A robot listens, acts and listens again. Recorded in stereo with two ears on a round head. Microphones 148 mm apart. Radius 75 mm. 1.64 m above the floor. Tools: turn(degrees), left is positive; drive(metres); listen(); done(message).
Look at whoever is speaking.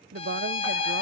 turn(degrees=-60)
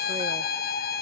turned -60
listen()
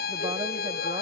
listen()
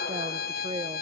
turn(degrees=-25)
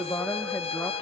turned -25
turn(degrees=15)
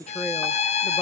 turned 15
done("Found it: a woman speaking, straight ahead, under 1 m away.")